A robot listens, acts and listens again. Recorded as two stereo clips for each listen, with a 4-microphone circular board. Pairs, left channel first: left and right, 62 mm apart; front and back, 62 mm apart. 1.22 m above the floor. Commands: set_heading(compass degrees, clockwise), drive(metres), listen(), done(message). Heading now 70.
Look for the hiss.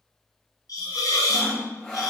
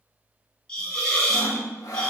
set_heading(355)
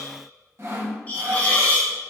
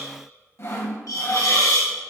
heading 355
set_heading(330)
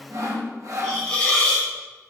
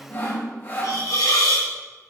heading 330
set_heading(315)
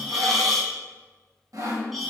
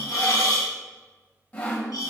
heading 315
done("Facing the hiss, under 1 m away.")